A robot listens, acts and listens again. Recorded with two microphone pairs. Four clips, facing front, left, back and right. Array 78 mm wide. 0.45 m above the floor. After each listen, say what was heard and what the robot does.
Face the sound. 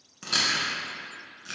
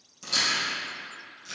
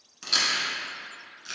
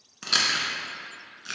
The chewing: 70° right. Turn 70° right.
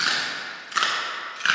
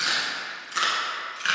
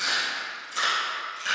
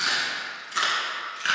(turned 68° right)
Facing the chewing.